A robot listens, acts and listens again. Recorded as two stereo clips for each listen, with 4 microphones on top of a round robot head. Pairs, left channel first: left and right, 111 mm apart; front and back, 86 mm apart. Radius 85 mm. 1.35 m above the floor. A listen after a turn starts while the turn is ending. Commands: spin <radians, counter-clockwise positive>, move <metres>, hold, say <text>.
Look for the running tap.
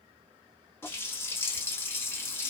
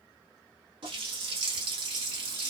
spin 2.79
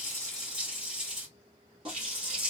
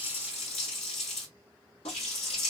spin -0.61
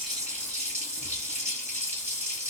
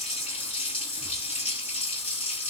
spin -0.26
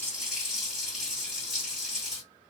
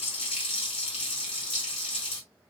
say Found it: a running tap, straight ahead, under 1 m away.